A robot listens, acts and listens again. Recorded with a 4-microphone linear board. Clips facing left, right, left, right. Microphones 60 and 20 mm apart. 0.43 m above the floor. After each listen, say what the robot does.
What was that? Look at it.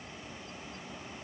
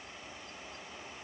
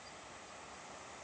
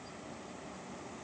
Keep listening.
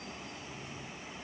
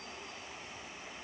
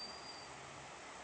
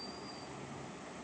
Keep listening.
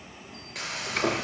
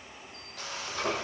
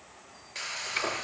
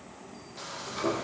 Turn 90° left.
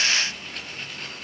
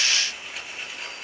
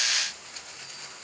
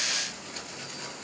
Facing the frying.